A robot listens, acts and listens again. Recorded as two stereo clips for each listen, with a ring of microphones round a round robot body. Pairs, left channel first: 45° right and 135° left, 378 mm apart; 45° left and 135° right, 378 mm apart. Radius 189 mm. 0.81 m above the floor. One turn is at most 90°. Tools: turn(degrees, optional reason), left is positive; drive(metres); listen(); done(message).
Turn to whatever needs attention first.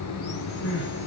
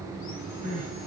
turn(degrees=-65, reason="The crying: 65° right.")
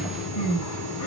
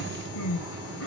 done("Facing the crying.")